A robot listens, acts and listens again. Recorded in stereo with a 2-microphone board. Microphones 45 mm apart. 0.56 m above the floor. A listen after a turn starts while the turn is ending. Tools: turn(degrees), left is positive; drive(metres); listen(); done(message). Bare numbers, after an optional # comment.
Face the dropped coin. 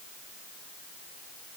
listen()
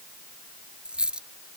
# The dropped coin: about 20° right or 160° right.
turn(-20)
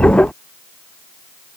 listen()
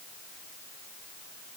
done("I heard a dropped coin, but can't make it out now. It was about straight ahead or 140° right.")